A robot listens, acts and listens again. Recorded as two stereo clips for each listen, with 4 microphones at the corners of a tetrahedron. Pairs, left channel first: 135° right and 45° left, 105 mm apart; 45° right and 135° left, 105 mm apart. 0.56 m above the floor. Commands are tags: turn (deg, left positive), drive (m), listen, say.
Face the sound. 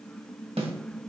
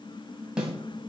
<turn deg="55"/>
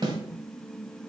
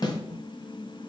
<say>Facing the snare drum.</say>